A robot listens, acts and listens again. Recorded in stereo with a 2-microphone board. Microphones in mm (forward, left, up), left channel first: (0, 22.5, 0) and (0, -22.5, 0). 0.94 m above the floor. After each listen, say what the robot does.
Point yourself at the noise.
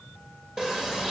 Turn 30° right.
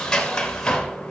Turn 15° left.
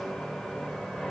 Found it: a sliding door, straight ahead.